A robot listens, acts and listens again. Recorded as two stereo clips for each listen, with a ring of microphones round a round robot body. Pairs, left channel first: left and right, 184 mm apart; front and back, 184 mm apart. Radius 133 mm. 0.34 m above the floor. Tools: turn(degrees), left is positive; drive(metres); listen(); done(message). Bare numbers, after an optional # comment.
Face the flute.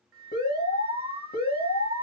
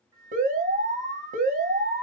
# The flute: 105° right.
turn(-105)
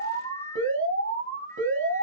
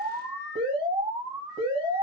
listen()
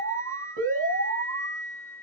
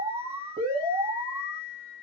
# The flute is now 15° left.
turn(15)
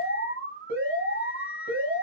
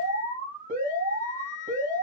done("Found it: a flute, straight ahead, 1 to 2 m away.")